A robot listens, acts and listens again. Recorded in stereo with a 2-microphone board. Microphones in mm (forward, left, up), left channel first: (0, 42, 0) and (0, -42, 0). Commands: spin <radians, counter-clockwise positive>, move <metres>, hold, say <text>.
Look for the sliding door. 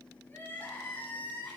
hold
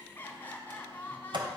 spin -1.22
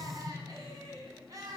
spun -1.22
say Facing the sliding door.